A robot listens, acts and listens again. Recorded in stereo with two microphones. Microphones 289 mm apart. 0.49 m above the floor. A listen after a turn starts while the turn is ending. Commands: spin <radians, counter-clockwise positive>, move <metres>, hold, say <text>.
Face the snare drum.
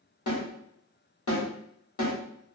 spin 1.22
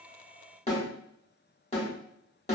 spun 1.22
spin 0.44
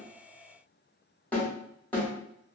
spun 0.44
say Found it: a snare drum, straight ahead, 1 to 2 m away.